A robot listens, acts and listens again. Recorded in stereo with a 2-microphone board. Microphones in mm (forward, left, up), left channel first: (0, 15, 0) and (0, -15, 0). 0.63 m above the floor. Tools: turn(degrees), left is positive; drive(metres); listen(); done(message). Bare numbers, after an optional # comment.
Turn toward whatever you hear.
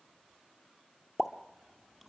turn(30)
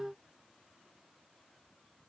listen()
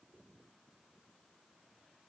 done("I heard a pop, but can't make it out now. It was about 30° right or 150° left.")